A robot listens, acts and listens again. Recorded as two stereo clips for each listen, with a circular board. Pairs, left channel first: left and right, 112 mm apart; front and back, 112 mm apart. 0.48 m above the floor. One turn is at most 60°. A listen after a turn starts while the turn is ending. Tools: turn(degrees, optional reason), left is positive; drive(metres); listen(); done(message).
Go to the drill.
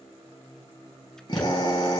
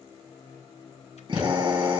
turn(degrees=60, reason="The drill: 135° left.")
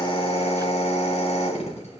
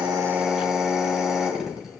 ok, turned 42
turn(degrees=60, reason="The drill is now 95° left.")
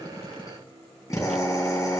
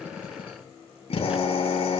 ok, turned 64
turn(degrees=30, reason="The drill is now 30° left.")
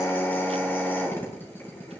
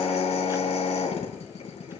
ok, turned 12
turn(degrees=20, reason="The drill is now 20° left.")
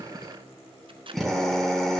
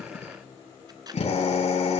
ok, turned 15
drive(metres=1.0)
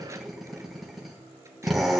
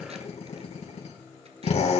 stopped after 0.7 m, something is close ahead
done("Something is in my way. I am facing the drill but have not reached it.")